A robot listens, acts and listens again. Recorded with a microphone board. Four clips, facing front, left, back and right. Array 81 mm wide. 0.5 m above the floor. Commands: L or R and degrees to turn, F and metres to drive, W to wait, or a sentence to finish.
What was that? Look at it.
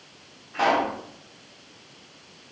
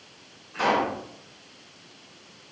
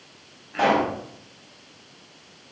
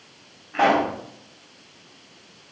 R105
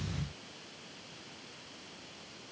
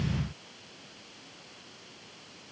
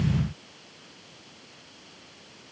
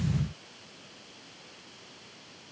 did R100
I heard a pop from this way, but can't make it out now.